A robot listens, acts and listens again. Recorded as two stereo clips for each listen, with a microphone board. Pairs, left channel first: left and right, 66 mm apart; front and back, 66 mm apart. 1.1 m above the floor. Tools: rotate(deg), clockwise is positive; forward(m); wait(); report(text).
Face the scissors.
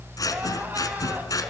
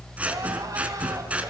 rotate(-115)
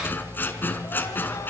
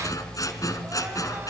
rotate(-30)
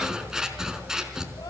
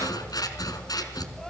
rotate(10)
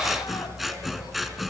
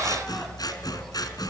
report("Facing the scissors.")